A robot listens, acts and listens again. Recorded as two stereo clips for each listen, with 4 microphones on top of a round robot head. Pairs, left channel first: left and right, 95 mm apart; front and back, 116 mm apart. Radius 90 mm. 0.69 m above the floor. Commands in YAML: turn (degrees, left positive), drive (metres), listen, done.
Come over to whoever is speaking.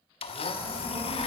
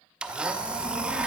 turn: -70
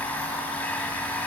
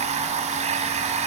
listen: true
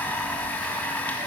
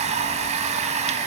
listen: true
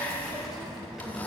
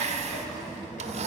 drive: 1.0
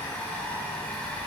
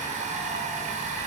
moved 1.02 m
drive: 1.0
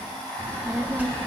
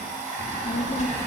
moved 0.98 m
turn: -20
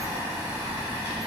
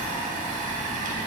drive: 1.0
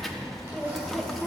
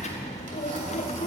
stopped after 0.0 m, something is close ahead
done: "Arrived at the child speaking, straight ahead."